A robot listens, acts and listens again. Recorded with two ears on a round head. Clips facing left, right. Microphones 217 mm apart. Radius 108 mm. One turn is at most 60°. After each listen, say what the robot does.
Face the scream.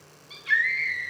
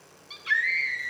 Turn 30° right.
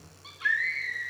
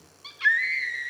Turn 60° right.
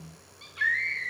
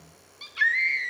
Turn 60° right.
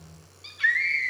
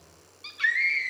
Turn 10° right.
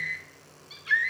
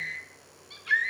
Facing the scream, 1 to 2 m away.